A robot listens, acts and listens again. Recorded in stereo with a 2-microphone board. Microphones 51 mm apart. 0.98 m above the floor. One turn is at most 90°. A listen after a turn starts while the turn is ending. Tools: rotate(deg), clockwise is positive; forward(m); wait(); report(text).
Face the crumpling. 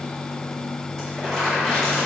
rotate(-20)
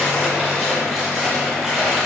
report("Found it: crumpling, straight ahead.")